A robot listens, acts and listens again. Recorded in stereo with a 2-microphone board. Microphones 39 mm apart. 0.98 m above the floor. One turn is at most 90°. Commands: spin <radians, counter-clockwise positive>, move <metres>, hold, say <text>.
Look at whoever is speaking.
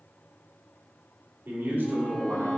spin -1.31
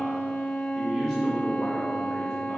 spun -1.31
say Found it: a man speaking, straight ahead.